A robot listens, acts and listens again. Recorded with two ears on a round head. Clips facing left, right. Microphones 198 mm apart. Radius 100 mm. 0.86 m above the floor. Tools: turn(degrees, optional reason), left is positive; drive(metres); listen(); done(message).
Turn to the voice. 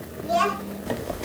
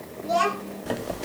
turn(degrees=30)
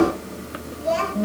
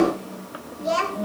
turn(degrees=-20, reason="So it is at 20° right.")
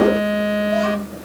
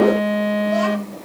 listen()
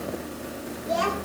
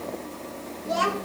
done("Facing the child speaking.")